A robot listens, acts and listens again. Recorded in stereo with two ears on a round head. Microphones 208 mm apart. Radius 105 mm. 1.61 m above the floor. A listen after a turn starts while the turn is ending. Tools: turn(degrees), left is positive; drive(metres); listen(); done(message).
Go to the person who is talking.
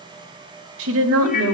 turn(degrees=-65)
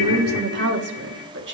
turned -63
turn(degrees=-50)
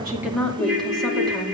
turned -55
drive(metres=1.0)
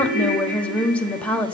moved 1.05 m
drive(metres=1.0)
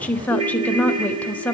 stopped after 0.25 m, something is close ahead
done("Arrived at the woman speaking, straight ahead.")